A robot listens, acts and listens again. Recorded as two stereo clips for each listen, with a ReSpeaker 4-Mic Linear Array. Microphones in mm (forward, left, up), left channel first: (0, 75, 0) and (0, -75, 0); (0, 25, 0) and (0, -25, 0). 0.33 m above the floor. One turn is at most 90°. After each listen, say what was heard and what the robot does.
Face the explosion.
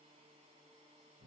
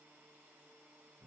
Keep listening.
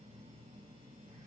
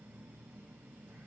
Keep listening.
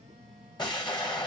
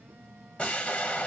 The explosion: about 30° left or 150° left. Turn 30° left.
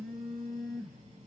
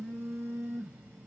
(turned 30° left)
Keep listening.
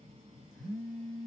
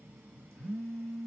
I heard an explosion, but can't make it out now. It was about straight ahead or 120° left.